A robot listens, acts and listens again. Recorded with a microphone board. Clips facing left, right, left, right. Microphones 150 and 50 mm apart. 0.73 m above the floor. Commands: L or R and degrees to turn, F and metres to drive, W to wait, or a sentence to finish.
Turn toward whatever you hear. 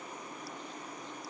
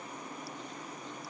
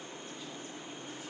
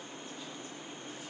W
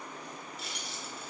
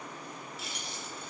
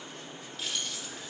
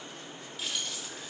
L30
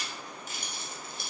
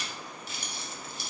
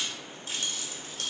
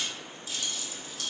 L125
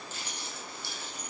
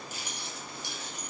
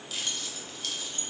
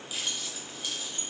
R20
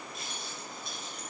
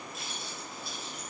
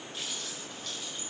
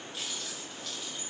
Found it: keys jangling, straight ahead, 2 to 4 m away.